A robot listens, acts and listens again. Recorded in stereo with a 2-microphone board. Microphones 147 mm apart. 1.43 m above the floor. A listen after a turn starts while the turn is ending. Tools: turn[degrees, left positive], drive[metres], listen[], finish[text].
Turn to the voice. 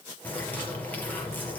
Action: listen[]
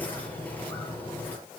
Action: listen[]
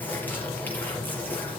Action: finish[I can't make out anyone speaking to turn to.]